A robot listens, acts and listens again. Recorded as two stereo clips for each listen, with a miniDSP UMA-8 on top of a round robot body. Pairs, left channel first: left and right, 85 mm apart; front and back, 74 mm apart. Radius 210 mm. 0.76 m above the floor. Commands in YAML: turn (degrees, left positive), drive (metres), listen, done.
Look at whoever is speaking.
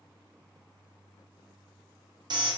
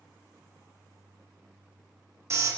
listen: true
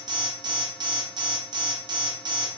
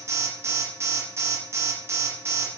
listen: true
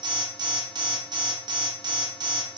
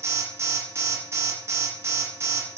done: "I can't make out anyone speaking, only an alarm."